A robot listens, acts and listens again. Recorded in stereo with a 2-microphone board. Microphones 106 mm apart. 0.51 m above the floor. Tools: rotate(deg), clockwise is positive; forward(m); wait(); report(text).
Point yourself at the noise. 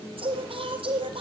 rotate(60)
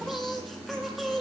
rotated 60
report("Found it: singing, straight ahead.")